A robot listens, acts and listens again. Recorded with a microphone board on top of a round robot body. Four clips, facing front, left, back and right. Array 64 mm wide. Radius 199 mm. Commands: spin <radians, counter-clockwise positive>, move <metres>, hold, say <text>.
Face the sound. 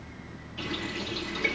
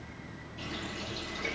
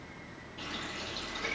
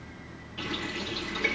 spin -1.22
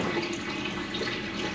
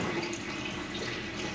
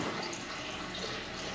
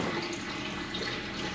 spin -0.26
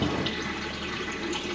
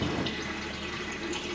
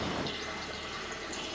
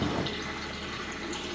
say Facing the running tap.